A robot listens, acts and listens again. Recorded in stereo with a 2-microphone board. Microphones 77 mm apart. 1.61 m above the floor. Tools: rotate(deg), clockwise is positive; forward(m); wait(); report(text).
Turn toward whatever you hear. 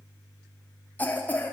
rotate(-20)
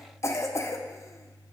rotate(-140)
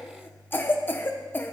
rotate(-30)
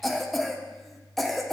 report("Found it: a cough, straight ahead, 1 to 2 m away.")